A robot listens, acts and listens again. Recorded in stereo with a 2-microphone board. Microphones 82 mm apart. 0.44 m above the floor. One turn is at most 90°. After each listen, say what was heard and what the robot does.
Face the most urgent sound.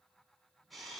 Keep listening.
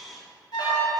The alarm: about 70° left or 110° left. Turn 70° left.
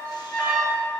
So it is at 25° left. Turn 25° left.
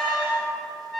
Facing the alarm.